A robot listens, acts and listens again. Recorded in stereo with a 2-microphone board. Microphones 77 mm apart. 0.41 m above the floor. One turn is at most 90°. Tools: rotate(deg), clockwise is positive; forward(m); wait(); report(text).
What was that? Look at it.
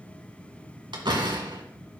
rotate(90)
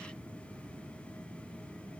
report("Facing where the door slam came from. I can't hear it now.")